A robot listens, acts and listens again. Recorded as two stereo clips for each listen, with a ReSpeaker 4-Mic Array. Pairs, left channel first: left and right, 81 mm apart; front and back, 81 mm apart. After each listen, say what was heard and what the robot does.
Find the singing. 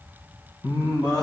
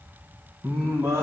The singing: 125° left. Turn 125° left.
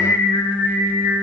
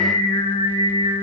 Found it: singing, straight ahead.